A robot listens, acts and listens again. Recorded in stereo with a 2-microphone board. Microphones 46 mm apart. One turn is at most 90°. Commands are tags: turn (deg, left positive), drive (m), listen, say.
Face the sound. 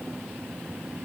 <listen/>
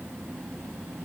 <listen/>
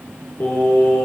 <turn deg="70"/>
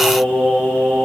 <turn deg="40"/>
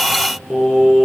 <say>Facing the singing, 1 to 2 m away.</say>